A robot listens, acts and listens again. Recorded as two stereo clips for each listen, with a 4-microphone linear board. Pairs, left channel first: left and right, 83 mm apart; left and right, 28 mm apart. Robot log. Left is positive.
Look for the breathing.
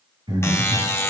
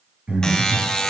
note: The breathing: about 60° right or 120° right.
cmd yaw -60
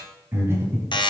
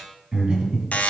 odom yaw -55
note: So it is at 35° right.
cmd yaw -35
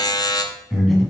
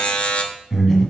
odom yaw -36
end: Facing the breathing, 1 to 2 m away.